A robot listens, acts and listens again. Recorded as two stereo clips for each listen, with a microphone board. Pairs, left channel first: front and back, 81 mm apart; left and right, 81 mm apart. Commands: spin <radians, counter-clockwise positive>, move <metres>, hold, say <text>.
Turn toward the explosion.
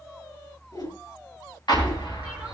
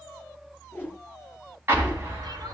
spin -0.52
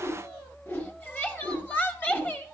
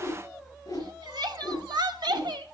say I heard an explosion from this way, but can't make it out now.